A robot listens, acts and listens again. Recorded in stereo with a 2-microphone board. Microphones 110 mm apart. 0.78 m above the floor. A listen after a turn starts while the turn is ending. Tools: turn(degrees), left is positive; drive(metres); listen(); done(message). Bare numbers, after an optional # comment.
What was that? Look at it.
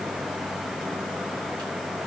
listen()
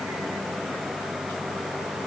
listen()
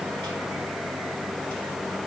done("I can't make out anything.")